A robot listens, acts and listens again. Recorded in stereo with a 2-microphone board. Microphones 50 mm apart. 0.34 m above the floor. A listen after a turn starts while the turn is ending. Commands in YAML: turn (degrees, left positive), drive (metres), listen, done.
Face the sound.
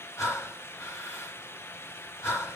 turn: 65
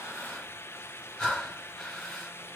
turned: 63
done: "Facing the breathing."